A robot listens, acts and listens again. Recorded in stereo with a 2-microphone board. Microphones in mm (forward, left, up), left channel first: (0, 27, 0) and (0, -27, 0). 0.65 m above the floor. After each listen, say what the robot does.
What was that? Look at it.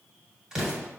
Turn 30° right.
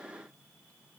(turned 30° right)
Keep listening.
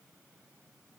I heard an explosion, but can't make it out now. It was about 15° left or 135° right.